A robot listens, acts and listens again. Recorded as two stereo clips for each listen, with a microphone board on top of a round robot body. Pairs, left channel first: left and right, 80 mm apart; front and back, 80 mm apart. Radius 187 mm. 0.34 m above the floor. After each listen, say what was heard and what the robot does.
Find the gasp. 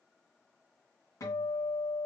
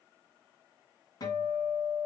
Keep listening.
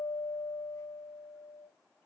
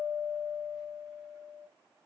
Keep listening.
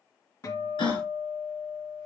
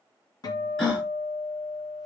The gasp: 85° left. Turn 85° left.
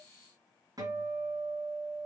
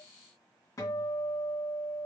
I heard a gasp from this way, but can't make it out now.